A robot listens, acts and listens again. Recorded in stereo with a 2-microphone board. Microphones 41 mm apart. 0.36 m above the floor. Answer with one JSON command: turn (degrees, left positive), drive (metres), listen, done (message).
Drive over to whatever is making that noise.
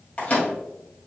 {"turn": 30}
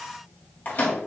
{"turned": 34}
{"turn": 110}
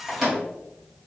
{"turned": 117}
{"drive": 1.0}
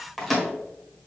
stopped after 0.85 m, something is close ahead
{"done": "Arrived at the microwave, straight ahead."}